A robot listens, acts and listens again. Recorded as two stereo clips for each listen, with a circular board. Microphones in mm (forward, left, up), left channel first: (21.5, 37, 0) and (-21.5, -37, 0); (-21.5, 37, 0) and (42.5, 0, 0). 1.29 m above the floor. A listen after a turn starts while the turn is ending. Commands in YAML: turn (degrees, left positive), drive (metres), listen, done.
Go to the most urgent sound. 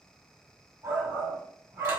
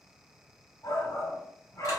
turn: 175
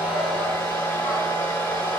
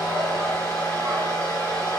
listen: true
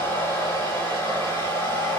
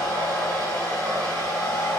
listen: true
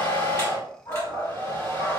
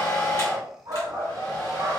drive: 1.0
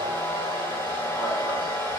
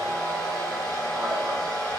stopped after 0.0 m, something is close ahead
listen: true
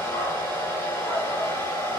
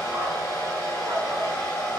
listen: true
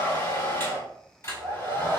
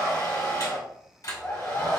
done: "I heard a shout from this way, but can't make it out now. I did not reach it."